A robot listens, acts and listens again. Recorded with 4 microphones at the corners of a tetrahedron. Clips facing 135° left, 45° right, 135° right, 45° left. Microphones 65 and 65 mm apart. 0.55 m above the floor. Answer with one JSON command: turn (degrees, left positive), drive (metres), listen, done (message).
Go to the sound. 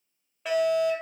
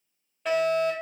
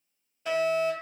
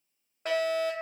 {"turn": 50}
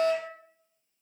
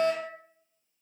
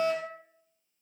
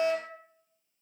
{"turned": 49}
{"drive": 1.0}
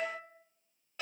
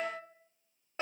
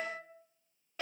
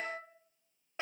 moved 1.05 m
{"drive": 1.0}
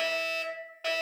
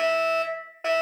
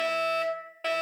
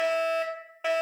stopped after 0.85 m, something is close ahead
{"turn": -20}
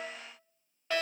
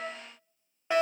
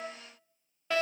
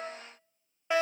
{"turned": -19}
{"done": "Arrived at the fire alarm, straight ahead."}